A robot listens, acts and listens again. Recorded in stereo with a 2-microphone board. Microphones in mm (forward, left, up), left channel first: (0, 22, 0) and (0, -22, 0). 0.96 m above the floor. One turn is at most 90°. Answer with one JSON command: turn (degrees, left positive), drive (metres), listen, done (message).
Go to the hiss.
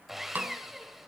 {"listen": true}
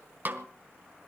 {"listen": true}
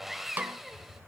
{"turn": -90}
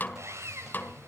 {"turn": -10}
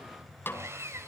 {"drive": 1.0}
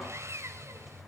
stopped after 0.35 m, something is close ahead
{"done": "Something is in my way. I am facing the hiss but have not reached it."}